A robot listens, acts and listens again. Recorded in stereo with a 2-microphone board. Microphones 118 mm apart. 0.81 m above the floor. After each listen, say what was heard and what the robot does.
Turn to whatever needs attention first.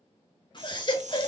The baby crying: about 40° left or 140° left. Turn 40° left.
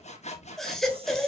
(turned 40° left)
Found it: a baby crying, straight ahead.